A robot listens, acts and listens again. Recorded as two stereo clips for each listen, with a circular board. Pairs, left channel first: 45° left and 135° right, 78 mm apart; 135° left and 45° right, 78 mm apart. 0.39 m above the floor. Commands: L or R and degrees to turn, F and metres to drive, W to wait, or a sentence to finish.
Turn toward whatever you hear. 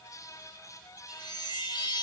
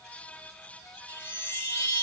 L70
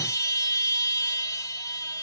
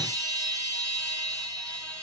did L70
Facing the chime.